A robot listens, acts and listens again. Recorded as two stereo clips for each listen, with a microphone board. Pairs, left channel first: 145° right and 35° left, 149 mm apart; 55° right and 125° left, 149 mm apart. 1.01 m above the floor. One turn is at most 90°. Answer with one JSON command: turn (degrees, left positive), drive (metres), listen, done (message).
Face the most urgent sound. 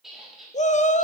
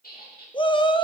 {"turn": -90}
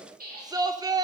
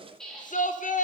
{"turn": -30}
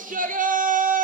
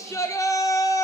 {"turn": 15}
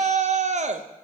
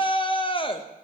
{"done": "Found it: a shout, straight ahead."}